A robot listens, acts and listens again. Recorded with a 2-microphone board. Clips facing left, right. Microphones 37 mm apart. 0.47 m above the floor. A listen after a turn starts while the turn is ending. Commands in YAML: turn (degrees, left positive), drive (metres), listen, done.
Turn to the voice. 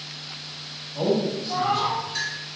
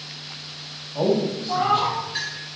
turn: -45
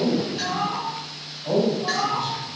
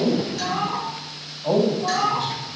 turn: -85
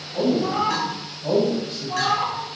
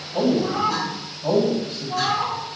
turn: -30
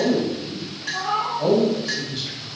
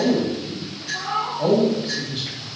turn: -10
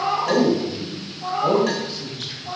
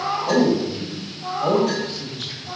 done: "Found it: a man speaking, straight ahead, 2 to 4 m away."